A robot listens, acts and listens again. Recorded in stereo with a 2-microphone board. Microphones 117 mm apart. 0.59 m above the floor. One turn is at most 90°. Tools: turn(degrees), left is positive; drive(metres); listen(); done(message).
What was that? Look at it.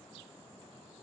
listen()
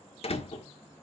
turn(degrees=60)
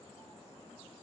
listen()
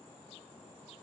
done("I heard a door slam, but can't make it out now. It was about straight ahead or 60° left.")